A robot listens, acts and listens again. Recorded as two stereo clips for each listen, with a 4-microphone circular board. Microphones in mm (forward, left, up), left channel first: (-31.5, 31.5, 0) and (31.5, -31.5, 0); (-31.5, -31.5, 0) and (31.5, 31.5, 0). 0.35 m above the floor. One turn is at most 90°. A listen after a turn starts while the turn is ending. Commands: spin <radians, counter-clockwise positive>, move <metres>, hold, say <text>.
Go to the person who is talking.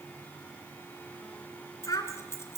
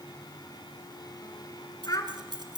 spin 1.57
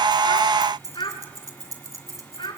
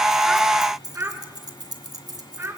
spin 1.57
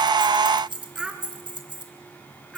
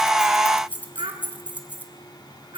spin 0.70
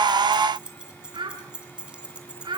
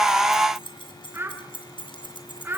spin -0.35
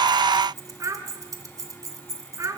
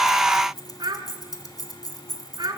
spin 0.17
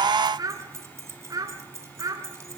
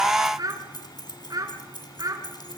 move 1.0
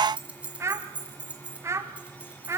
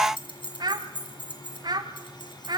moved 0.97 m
spin 0.17
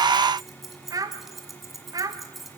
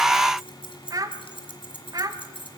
move 1.0
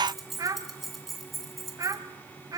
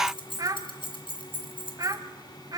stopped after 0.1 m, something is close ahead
say Arrived at the child speaking, straight ahead.